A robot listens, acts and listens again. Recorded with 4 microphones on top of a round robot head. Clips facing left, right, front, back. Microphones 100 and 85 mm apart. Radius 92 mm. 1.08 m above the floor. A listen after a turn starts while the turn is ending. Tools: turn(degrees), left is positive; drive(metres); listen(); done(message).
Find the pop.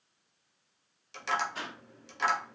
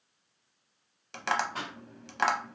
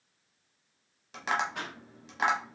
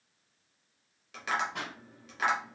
turn(degrees=-135)
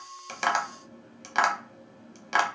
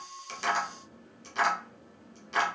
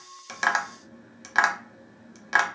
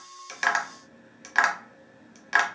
done("I heard a pop from this way, but can't make it out now.")